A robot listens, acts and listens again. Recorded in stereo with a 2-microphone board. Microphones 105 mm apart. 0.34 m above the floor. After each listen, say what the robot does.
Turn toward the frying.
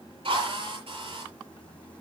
Keep listening.
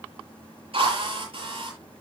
Keep listening.
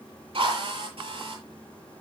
I can't make out frying, only a drill.